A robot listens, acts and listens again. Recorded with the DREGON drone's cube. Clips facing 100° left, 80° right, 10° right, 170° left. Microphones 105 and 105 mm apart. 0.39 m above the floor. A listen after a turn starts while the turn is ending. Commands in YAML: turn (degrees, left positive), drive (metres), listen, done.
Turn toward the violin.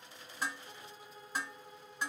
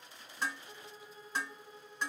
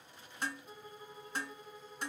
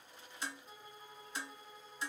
turn: 70
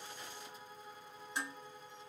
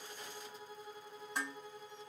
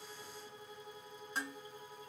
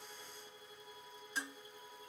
turn: 10
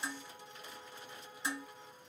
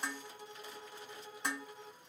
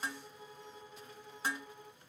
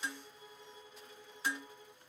done: "Found it: a violin, straight ahead."